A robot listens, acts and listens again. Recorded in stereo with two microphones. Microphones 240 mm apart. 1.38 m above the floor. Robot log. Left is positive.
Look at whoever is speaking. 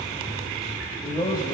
note: The man speaking: about 20° left or 160° left.
cmd yaw +20
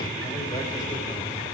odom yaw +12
cmd idle
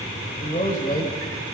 note: The man speaking: about 35° left or 145° left.
cmd yaw +35
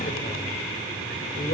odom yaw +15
note: So it is at 130° left.
cmd yaw +130
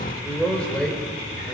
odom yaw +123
end: Facing the man speaking, over 4 m away.